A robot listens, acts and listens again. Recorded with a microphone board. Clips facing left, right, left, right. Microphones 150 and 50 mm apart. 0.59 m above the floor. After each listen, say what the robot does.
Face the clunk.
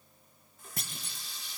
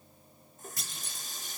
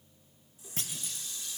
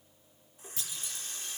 Turn 55° left.
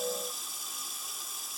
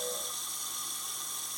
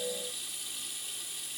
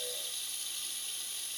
Keep listening.
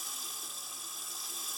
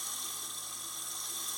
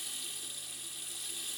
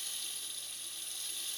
I heard a clunk, but can't make it out now. It was about straight ahead or 70° left.